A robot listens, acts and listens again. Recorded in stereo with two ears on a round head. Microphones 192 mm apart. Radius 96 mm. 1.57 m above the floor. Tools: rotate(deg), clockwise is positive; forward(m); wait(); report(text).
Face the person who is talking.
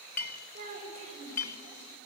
rotate(30)
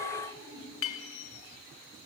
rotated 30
rotate(120)
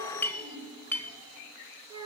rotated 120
rotate(20)
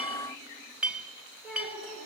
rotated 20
report("Found it: a child speaking, straight ahead, over 4 m away.")